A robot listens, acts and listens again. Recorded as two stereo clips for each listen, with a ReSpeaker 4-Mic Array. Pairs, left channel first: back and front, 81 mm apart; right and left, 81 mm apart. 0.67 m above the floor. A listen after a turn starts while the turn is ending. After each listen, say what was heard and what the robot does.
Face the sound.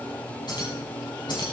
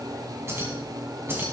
The keys jangling: 150° left. Turn 150° left.
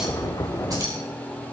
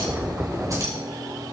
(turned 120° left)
The keys jangling is now 45° left. Turn 45° left.
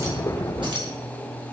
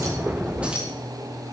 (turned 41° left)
The keys jangling is now 15° left. Turn 15° left.
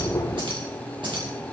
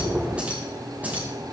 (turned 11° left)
The keys jangling is now 20° left. Turn 20° left.
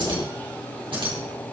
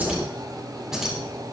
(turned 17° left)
Found it: keys jangling, straight ahead.